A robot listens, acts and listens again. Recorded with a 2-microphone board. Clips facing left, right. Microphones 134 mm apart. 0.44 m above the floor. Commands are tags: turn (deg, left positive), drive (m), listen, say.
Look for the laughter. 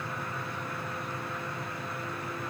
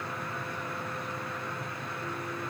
<listen/>
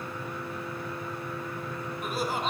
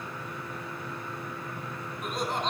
<turn deg="30"/>
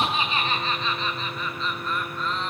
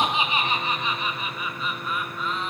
<turn deg="-30"/>
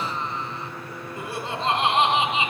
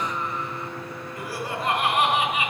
<turn deg="25"/>
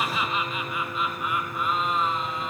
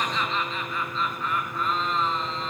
<turn deg="15"/>
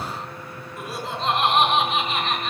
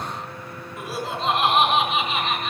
<say>Found it: laughter, straight ahead.</say>